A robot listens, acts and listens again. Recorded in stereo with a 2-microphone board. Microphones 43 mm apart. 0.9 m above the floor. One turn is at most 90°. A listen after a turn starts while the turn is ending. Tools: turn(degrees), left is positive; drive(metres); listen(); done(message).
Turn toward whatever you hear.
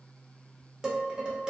turn(degrees=-20)
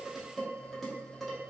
done("Facing the dishes clattering, under 1 m away.")